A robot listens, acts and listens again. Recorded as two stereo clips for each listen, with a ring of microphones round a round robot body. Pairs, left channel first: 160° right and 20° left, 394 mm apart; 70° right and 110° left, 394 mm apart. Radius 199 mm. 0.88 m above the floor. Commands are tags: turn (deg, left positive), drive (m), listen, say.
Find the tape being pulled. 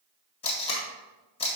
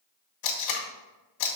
<turn deg="-80"/>
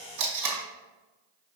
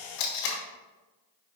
<turn deg="-25"/>
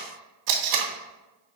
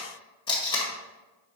<turn deg="10"/>
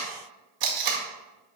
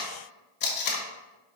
<say>Facing the tape being pulled, 1 to 2 m away.</say>